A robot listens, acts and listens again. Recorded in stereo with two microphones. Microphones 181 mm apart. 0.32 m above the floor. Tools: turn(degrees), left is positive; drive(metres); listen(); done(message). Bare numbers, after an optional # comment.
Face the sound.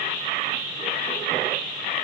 listen()
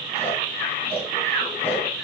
listen()
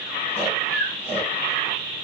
turn(30)
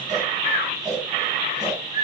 # So it is at 25° right.
turn(-25)
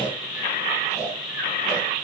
done("Found it: snoring, straight ahead, 2 to 4 m away.")